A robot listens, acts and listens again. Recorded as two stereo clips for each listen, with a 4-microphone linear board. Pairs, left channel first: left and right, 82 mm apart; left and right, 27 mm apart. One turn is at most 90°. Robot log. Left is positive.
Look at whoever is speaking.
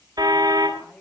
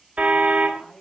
cmd yaw +30
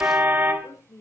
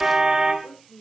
note: So it is at 140° left.
cmd yaw +90
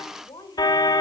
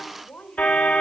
note: The woman speaking is now 60° left.
cmd yaw +60
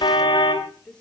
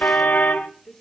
note: The woman speaking is now 10° left.
cmd yaw +10
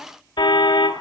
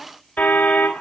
cmd idle
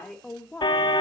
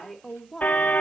note: The woman speaking is now 10° left.
cmd yaw +10
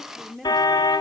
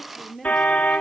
end: Facing the woman speaking, 2 to 4 m away.